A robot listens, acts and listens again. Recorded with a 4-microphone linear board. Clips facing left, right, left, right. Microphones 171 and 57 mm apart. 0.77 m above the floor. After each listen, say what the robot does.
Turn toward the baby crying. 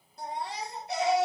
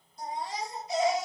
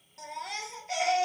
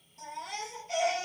Turn 65° left.
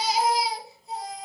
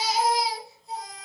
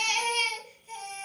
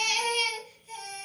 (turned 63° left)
Facing the baby crying.